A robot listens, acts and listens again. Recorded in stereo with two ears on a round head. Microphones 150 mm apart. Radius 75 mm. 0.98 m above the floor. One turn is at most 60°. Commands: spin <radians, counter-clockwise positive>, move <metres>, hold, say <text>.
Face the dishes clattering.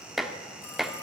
spin 0.52
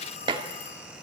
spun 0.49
spin -0.52
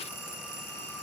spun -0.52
hold
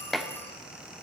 say Facing the dishes clattering.